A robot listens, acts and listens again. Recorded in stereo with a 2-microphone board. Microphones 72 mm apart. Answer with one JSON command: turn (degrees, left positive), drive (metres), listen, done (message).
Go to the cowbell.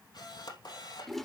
{"listen": true}
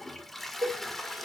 {"turn": -55}
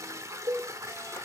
{"turn": -65}
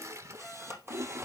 {"listen": true}
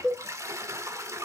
{"turn": 10}
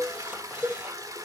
{"drive": 1.0}
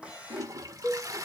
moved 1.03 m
{"turn": -10}
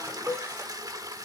{"drive": 1.0}
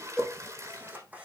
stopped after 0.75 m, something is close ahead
{"done": "I am next to the cowbell."}